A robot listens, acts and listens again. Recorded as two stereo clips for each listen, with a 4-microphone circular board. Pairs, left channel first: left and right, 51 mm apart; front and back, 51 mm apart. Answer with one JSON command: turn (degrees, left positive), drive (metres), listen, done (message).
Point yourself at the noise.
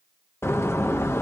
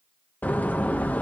{"turn": 55}
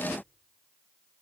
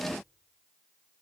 {"done": "Facing where the door slam came from. I can't hear it now."}